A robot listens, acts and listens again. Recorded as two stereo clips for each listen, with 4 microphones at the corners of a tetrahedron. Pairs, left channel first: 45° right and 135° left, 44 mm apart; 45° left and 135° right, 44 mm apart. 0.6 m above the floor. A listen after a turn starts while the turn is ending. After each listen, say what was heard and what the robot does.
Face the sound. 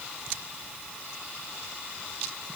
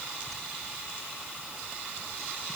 Keep listening.
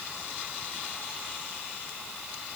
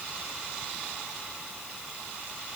Keep listening.
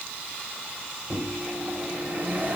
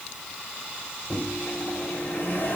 The microwave: 85° left. Turn 85° left.
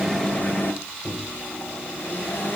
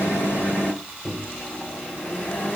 Found it: a microwave, straight ahead.